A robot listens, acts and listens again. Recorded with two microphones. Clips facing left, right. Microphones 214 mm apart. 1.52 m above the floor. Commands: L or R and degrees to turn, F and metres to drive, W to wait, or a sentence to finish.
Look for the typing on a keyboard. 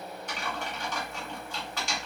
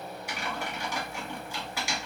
R30
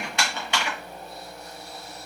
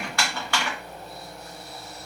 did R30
L20
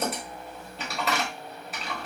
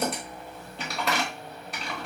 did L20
Facing the typing on a keyboard.